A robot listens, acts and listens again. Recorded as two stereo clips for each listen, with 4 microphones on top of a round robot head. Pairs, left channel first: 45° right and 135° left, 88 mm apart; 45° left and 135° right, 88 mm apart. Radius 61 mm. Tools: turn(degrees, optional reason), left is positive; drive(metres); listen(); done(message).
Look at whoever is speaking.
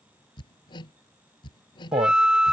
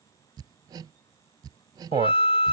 turn(degrees=170, reason="The man speaking: 170° left.")
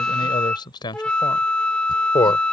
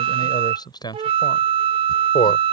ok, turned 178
done("Found it: a man speaking, straight ahead.")